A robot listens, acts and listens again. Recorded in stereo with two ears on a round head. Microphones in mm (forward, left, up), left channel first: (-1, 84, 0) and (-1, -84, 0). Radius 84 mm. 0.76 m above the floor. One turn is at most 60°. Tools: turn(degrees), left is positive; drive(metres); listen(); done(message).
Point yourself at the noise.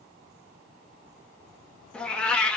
turn(degrees=30)
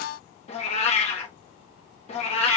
turn(degrees=60)
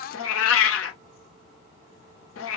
turn(degrees=60)
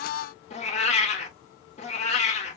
turn(degrees=35)
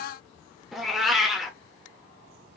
done("Found it: a cat meowing, straight ahead, under 1 m away.")